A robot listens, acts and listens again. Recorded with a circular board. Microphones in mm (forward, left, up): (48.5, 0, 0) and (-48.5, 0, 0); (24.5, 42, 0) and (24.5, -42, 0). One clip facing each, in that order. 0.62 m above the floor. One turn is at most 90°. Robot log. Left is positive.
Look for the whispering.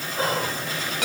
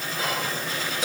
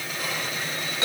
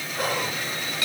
note: The whispering: 55° right.
cmd yaw -55
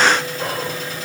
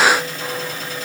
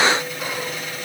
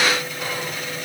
cmd idle
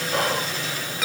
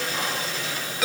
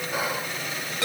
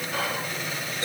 note: The whispering is now 15° left.
cmd yaw +15
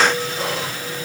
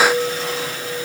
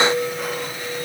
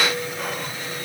cmd idle
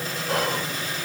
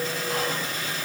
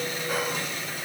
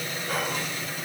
cmd idle
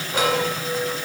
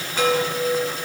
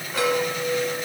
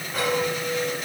end: Facing where the whispering came from. I can't hear it now.